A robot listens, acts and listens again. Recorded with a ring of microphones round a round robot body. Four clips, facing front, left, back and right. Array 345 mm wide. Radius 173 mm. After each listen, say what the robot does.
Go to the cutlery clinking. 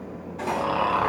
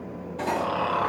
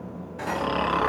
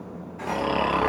Turn 110° left.
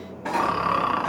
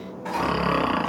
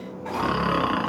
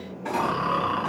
Drive 1.0 m forward.
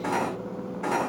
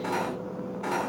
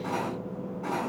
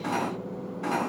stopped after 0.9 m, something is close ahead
Turn 10° right.
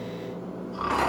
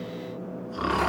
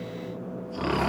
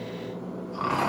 Keep listening.
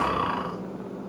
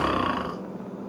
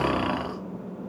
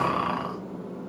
Keep listening.
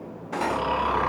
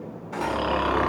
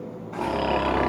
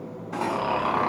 Something is in my way. I am facing the cutlery clinking but have not reached it.